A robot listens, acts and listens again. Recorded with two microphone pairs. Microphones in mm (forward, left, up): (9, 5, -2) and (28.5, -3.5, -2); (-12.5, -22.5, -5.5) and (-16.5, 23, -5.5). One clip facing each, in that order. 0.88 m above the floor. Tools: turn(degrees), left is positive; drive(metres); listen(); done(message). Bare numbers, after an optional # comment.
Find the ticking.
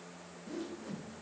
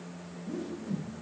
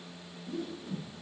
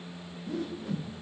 listen()
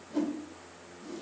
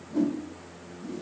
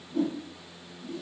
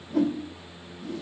listen()
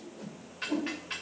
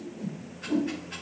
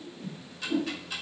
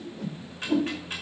# The ticking: 150° left.
turn(150)
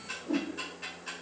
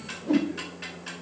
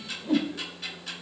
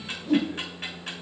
# The ticking is now 40° left.
turn(40)
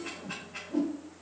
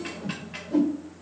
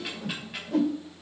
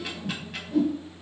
done("Found it: ticking, straight ahead, 2 to 4 m away.")